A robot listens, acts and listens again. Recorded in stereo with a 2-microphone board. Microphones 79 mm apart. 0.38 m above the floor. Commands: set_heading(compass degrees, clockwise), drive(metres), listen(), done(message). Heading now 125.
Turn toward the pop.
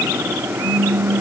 set_heading(185)
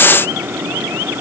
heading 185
listen()
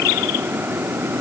done("I heard a pop, but can't make it out now. It was about straight ahead or 60° right.")